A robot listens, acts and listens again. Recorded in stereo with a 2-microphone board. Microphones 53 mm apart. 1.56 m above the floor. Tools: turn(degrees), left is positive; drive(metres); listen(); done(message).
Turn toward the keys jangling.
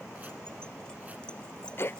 turn(degrees=15)
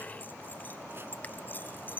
turn(degrees=35)
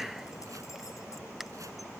listen()
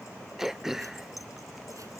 listen()
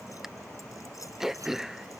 done("I heard keys jangling, but can't make it out now. It was about straight ahead or 110° left.")